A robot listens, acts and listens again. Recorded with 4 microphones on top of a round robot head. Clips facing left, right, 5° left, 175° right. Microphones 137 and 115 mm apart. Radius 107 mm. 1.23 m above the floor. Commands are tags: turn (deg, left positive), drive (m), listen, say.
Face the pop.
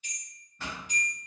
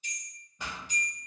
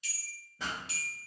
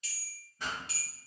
<turn deg="-15"/>
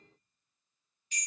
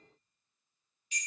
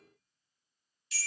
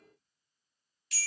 <say>I heard a pop from this way, but can't make it out now.</say>